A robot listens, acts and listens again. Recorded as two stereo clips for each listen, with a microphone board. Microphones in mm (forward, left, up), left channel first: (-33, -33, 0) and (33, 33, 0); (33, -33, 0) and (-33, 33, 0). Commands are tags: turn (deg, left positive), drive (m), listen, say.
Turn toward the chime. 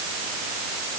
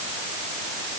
<listen/>
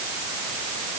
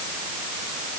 <listen/>
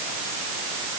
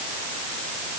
<say>I can't make out a chime to turn to.</say>